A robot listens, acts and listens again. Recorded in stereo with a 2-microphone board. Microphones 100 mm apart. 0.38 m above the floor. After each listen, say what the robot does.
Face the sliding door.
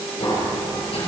Turn 70° left.
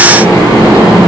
Turn 35° left.
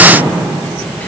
Turn 15° left.
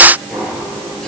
Found it: a sliding door, straight ahead.